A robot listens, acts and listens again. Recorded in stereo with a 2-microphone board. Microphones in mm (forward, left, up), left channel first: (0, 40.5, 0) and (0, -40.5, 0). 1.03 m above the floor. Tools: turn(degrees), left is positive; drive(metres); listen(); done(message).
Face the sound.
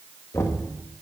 turn(degrees=35)
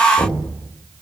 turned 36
turn(degrees=105)
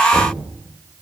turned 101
listen()
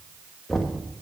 done("Found it: knocking, straight ahead.")